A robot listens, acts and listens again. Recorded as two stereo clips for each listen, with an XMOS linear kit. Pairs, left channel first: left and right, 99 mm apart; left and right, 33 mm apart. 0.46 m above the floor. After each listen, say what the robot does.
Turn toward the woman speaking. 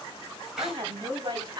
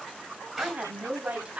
Turn 40° right.
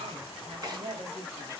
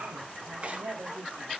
Turn 120° right.
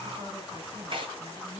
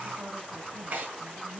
Turn 55° right.
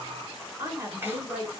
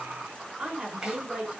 Turn 20° right.
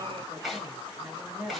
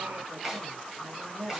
Facing the woman speaking, 2 to 4 m away.